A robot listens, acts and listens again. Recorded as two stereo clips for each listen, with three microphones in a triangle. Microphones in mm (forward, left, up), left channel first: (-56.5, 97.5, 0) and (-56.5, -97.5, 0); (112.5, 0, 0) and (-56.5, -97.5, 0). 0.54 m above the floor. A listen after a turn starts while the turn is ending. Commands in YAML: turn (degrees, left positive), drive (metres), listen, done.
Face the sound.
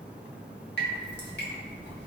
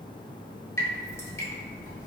turn: 105
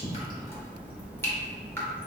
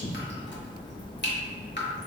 turn: 15
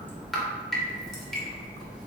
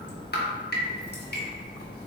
done: "Found it: dripping, straight ahead."